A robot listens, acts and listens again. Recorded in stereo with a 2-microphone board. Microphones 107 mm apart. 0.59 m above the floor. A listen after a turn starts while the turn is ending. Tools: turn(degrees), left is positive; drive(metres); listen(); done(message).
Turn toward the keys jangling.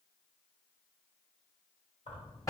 turn(degrees=90)
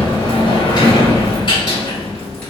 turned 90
listen()
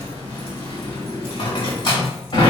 listen()
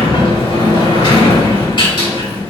done("Facing where the keys jangling came from. I can't hear it now.")